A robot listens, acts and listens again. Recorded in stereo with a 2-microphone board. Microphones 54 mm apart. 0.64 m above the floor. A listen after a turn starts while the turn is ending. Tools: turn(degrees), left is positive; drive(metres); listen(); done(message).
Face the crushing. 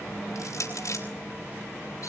turn(degrees=70)
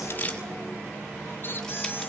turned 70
listen()
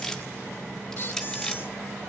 turn(degrees=10)
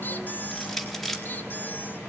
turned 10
done("Facing the crushing.")